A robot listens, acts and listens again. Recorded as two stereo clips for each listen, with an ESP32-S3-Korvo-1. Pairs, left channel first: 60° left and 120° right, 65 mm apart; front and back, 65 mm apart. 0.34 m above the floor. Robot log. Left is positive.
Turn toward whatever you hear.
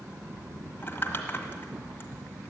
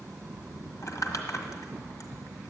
note: The crumpling: 10° left.
cmd yaw +10
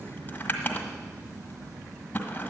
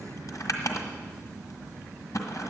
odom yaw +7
end: Found it: crumpling, straight ahead.